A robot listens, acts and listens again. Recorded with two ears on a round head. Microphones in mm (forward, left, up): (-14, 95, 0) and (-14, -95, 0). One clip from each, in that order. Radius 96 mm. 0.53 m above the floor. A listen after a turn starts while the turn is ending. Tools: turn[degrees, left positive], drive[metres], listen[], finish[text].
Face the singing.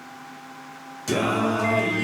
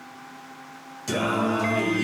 Action: turn[-30]
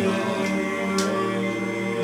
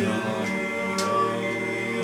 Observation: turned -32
Action: turn[-30]
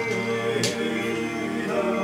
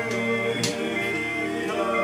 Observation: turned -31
Thought: The singing: about 15° right or 165° right.
Action: turn[-15]
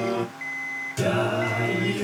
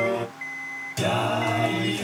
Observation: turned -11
Action: turn[-30]
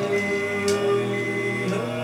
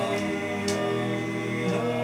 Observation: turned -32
Thought: So it is at 15° left.
Action: turn[15]
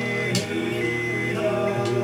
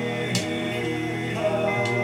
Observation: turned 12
Action: finish[Facing the singing.]